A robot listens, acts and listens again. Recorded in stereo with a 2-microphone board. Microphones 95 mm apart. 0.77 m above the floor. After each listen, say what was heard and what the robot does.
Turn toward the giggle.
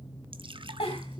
Turn 90° left.
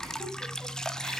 Keep listening.
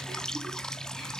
Keep listening.
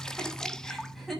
Found it: a giggle, straight ahead.